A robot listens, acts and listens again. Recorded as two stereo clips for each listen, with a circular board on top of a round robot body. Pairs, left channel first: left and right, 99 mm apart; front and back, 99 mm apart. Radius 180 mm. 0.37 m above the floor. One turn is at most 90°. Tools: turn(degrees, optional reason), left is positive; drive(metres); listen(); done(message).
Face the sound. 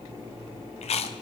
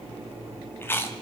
turn(degrees=70, reason="The chewing: 70° left.")
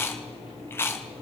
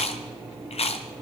turn(degrees=20, reason="The chewing is now 20° left.")
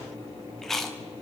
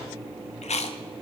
done("Facing the chewing.")